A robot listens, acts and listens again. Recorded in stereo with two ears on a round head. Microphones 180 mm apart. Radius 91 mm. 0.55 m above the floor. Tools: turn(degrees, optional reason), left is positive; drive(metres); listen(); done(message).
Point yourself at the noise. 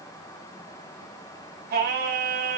turn(degrees=-50, reason="The singing: about 50° right or 130° right.")
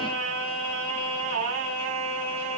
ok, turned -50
turn(degrees=-75, reason="So it is at 75° right.")
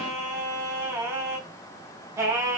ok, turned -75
turn(degrees=-15, reason="The singing is now 15° right.")
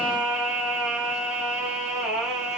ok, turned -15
done("Facing the singing.")